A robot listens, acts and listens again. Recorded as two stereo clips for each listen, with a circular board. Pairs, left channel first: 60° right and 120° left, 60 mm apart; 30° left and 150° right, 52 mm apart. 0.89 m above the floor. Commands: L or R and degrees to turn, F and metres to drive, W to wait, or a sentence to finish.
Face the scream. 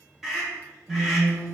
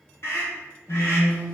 L35
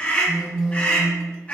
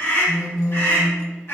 Found it: a scream, straight ahead, 1 to 2 m away.